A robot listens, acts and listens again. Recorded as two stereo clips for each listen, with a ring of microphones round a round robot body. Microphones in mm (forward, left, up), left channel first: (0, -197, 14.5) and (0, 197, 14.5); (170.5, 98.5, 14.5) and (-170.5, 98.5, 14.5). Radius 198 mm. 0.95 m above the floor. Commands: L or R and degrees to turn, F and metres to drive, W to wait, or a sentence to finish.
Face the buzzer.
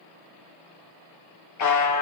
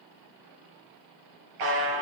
R140
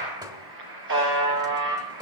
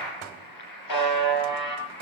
L30
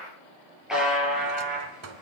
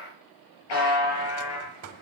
Found it: a buzzer, straight ahead.